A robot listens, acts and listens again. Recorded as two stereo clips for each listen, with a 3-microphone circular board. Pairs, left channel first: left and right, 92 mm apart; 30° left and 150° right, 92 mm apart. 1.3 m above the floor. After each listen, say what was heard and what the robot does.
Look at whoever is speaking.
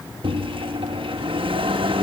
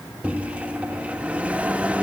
Keep listening.
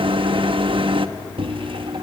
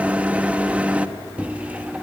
Keep listening.
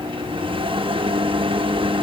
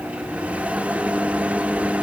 I can't make out anyone speaking, only a microwave.